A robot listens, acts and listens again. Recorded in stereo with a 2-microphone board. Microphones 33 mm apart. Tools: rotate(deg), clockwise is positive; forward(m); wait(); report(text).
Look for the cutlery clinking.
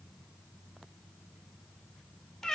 wait()
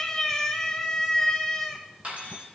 rotate(45)
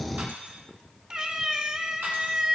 rotate(90)
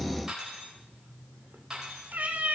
rotate(15)
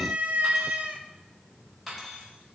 report("Found it: cutlery clinking, straight ahead.")